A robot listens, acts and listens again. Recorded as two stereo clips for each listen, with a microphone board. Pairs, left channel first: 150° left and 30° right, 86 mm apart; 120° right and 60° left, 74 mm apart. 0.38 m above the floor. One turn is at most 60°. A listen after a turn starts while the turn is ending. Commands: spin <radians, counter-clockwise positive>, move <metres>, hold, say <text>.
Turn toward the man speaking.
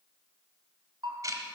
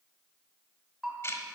hold
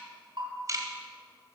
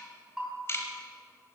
hold
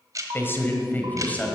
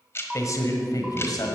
spin -1.05
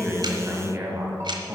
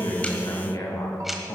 spin -1.05
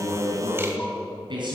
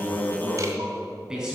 spin -0.35
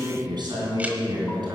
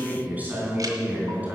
say Facing the man speaking, 2 to 4 m away.